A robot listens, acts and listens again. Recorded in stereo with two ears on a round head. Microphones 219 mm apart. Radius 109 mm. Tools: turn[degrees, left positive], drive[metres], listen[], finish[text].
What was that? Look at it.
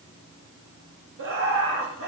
Thought: The laughter: about 55° right or 125° right.
Action: turn[-55]
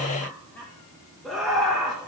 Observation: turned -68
Action: finish[Found it: laughter, straight ahead.]